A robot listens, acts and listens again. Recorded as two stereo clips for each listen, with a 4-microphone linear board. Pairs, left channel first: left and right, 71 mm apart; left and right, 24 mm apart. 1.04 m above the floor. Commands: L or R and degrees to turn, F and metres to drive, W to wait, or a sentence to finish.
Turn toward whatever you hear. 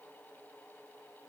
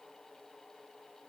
W
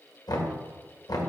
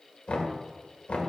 L60
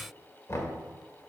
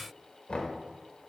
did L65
L45
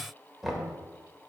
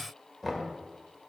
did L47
Facing the knocking, 1 to 2 m away.